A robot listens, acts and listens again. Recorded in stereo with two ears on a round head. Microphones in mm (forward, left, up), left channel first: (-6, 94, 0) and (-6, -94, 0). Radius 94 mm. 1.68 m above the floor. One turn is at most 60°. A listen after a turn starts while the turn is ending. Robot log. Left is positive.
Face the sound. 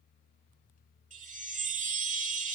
note: The chime: about 40° right or 140° right.
cmd yaw -40
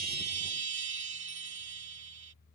note: So it is at 95° right.
cmd yaw -60
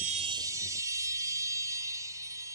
note: The chime is now 20° right.
cmd yaw -20
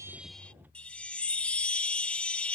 end: Facing the chime.